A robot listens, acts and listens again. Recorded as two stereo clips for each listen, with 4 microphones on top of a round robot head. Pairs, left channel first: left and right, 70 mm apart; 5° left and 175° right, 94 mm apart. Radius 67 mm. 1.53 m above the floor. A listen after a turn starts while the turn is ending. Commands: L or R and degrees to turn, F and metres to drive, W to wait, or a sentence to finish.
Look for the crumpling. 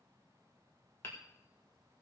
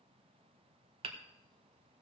W
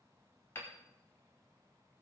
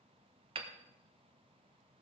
W
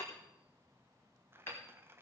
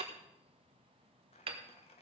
R30
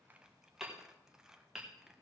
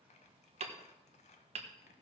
R10
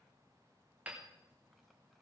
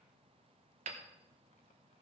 W
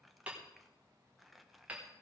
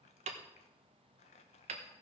Facing the crumpling.